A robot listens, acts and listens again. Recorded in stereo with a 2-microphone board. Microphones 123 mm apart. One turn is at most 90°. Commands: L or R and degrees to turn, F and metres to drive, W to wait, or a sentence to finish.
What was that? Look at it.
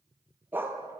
R15
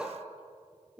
R30
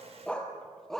Found it: a dog barking, straight ahead.